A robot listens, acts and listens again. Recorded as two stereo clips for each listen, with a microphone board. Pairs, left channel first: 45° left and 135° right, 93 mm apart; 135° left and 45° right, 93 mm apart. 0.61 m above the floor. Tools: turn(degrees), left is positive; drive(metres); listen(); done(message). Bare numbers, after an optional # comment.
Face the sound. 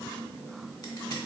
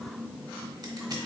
listen()
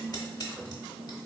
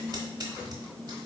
done("Found it: scissors, straight ahead.")